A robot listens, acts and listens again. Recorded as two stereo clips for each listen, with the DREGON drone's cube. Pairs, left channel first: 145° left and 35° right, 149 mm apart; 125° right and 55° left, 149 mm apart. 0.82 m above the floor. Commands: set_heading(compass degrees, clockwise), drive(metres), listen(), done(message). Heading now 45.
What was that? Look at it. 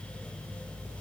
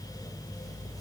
listen()
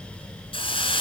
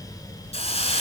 set_heading(210)
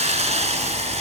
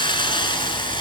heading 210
set_heading(280)
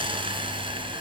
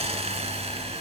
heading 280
set_heading(265)
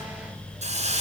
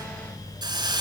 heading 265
done("Found it: a hiss, straight ahead.")